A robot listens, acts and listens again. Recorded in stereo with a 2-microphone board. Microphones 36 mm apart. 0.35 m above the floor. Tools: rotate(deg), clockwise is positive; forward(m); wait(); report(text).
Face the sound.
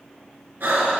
rotate(90)
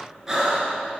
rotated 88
rotate(15)
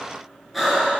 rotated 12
report("Found it: breathing, straight ahead.")